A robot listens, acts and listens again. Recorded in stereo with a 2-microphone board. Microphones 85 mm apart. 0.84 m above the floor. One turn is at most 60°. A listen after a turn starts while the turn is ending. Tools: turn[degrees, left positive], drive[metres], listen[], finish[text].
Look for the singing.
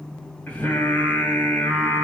Thought: The singing: about 20° left or 160° left.
Action: turn[20]
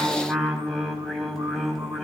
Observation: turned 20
Action: finish[Facing the singing, 2 to 4 m away.]